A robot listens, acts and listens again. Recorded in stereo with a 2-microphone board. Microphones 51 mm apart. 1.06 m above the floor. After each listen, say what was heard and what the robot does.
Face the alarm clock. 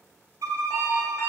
The alarm clock: about 70° left or 110° left. Turn 70° left.
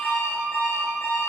So it is at 40° left. Turn 40° left.
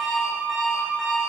Found it: an alarm clock, straight ahead, 2 to 4 m away.